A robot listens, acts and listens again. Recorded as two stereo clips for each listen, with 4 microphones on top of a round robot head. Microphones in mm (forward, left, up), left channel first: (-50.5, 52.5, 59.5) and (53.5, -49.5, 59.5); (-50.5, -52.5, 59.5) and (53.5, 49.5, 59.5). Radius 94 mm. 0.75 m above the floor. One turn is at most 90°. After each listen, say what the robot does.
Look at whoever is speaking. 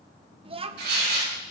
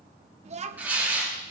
Facing the child speaking, 1 to 2 m away.